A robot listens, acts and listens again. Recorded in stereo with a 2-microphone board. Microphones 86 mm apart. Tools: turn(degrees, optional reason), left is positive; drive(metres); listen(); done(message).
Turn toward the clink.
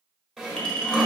turn(degrees=30)
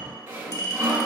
turn(degrees=145, reason="So it is at 145° left.")
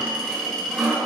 done("Found it: a clink, straight ahead, 1 to 2 m away.")